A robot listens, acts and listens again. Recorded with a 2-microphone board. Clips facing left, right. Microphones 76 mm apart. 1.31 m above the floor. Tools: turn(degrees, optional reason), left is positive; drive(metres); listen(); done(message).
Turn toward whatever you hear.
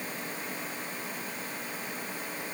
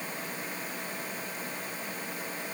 listen()
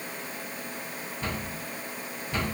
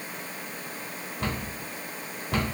turn(degrees=-60, reason="The cupboard door: about 60° right or 120° right.")
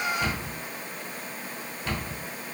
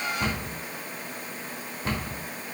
turn(degrees=-45, reason="So it is at 45° right.")
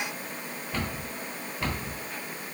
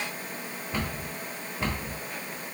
turn(degrees=-20, reason="The cupboard door is now 20° right.")
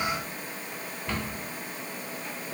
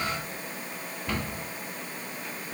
done("Found it: a cupboard door, straight ahead, 1 to 2 m away.")